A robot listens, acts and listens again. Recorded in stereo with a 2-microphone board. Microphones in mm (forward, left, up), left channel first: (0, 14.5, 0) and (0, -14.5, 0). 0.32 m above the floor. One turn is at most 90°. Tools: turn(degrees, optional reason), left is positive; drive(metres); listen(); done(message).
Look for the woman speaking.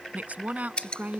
turn(degrees=-70, reason="The woman speaking: about 70° right or 110° right.")
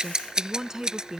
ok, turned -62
turn(degrees=-25, reason="So it is at 25° right.")
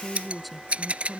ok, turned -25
done("Facing the woman speaking.")